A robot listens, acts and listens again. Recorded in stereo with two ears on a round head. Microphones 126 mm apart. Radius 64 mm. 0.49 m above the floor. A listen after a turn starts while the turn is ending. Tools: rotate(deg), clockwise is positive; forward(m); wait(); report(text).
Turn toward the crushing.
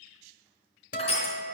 rotate(-40)
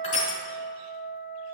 wait()
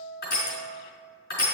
rotate(-95)
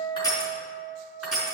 report("Facing the crushing.")